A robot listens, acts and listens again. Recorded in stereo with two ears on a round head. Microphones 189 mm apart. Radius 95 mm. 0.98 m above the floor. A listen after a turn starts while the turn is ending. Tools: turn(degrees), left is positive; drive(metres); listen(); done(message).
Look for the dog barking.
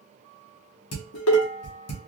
listen()
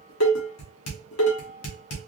listen()
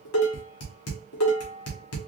done("I can't make out a dog barking, only dishes clattering.")